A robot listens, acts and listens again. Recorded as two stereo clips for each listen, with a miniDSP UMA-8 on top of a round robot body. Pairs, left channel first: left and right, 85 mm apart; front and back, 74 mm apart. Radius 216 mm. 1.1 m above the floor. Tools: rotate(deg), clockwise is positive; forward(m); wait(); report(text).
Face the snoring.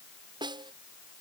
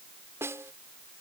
wait()
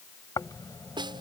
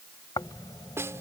rotate(-40)
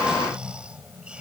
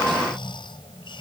rotate(10)
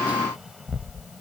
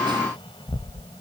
report("Found it: snoring, straight ahead.")